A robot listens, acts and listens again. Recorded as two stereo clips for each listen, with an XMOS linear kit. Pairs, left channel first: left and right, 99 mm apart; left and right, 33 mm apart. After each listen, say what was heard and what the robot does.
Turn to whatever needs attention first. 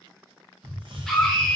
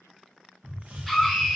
Turn 30° left.
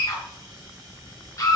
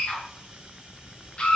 So it is at 145° left. Turn 145° left.
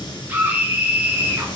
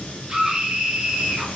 The scream is now 20° right. Turn 20° right.
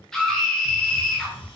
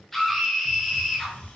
Found it: a scream, straight ahead.